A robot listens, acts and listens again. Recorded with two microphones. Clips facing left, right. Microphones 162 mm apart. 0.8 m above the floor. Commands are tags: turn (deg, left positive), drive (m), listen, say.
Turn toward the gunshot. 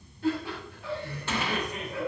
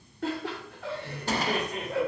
<turn deg="-35"/>
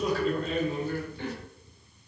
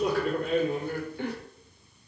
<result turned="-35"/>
<listen/>
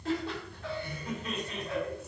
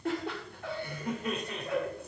<say>I heard a gunshot, but can't make it out now. It was about straight ahead or 110° right.</say>